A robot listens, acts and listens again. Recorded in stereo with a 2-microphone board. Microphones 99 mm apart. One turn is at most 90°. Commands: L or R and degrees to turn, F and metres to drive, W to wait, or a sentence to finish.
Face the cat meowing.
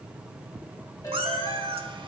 R65
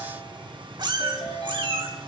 R55
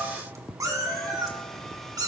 R40
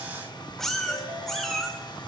Found it: a cat meowing, straight ahead, 2 to 4 m away.